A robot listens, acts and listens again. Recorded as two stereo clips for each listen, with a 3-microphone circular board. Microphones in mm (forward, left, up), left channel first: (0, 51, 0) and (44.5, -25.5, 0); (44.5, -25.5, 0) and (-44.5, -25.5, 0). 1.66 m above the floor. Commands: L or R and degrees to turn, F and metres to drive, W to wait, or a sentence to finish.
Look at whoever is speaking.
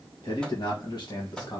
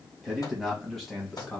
L85
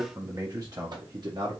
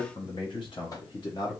R30
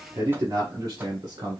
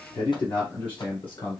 R20
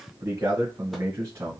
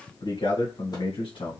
Found it: a man speaking, straight ahead, 1 to 2 m away.